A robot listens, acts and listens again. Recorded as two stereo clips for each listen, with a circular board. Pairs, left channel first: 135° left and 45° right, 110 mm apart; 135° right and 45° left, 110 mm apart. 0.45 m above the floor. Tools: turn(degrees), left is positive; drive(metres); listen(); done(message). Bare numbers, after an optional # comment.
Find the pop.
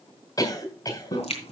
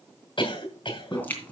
# The pop: 150° left.
turn(150)
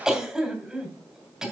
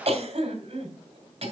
done("I heard a pop from this way, but can't make it out now.")